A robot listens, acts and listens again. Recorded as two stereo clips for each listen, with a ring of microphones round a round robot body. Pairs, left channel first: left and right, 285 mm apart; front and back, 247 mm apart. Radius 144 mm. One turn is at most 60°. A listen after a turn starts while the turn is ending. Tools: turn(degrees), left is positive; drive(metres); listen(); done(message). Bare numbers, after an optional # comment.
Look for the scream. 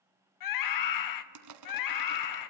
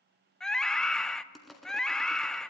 # The scream: 85° left.
turn(60)
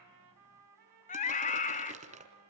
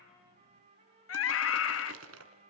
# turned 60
# The scream is now 25° left.
turn(25)
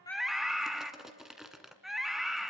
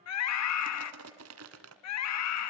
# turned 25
done("Found it: a scream, straight ahead.")